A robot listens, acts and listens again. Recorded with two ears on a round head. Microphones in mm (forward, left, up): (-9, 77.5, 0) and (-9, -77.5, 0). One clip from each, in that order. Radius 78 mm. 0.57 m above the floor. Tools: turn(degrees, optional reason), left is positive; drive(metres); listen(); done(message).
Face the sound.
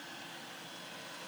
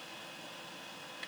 listen()
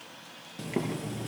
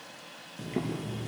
turn(degrees=40, reason="The boiling: about 40° left or 140° left.")
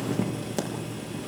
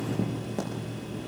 turn(degrees=95, reason="So it is at 95° left.")
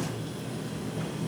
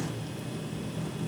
turn(degrees=-10, reason="The boiling is now 10° right.")
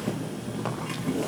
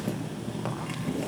done("Facing the boiling, over 4 m away.")